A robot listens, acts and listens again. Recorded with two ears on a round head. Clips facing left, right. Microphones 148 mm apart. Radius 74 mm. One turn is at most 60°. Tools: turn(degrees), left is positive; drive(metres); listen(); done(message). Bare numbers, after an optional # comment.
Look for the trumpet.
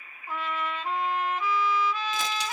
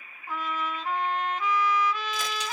turn(30)
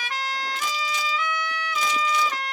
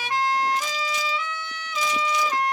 # So it is at 20° right.
turn(-20)
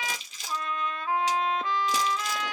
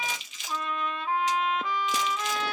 done("Facing the trumpet, 1 to 2 m away.")